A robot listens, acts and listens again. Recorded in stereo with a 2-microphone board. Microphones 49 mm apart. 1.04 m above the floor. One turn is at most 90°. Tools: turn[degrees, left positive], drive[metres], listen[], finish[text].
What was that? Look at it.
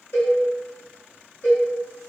Thought: The cowbell: about 55° left or 125° left.
Action: turn[55]
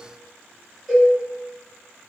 Action: finish[Facing the cowbell.]